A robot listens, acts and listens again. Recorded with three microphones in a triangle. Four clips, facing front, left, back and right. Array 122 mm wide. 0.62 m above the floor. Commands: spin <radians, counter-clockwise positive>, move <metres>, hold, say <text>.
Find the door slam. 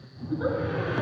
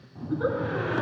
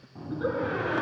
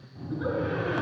spin 2.88
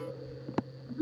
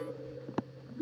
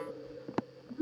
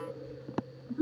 say I heard a door slam from this way, but can't make it out now.